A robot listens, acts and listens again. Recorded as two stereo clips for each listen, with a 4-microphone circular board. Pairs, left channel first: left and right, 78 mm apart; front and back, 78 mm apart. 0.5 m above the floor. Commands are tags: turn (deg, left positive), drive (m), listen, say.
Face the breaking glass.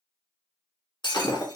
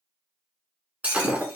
<turn deg="110"/>
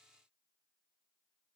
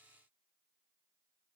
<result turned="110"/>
<say>Facing where the breaking glass came from. I can't hear it now.</say>